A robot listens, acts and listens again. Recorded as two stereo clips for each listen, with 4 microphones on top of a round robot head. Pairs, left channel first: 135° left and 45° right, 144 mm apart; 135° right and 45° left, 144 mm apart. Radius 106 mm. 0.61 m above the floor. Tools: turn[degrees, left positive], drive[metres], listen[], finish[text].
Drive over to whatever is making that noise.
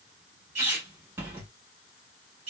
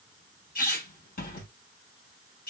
Thought: The squeak: 120° right.
Action: turn[-120]
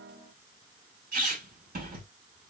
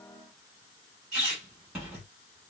Thought: The squeak is now 45° right.
Action: turn[-45]
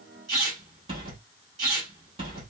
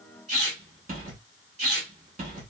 Thought: The squeak is now 10° left.
Action: turn[10]
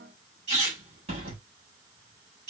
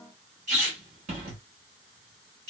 Action: drive[1.0]
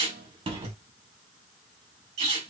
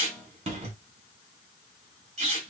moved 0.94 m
Action: drive[1.0]
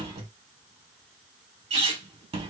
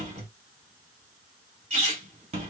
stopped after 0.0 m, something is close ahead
Action: finish[I am next to the squeak.]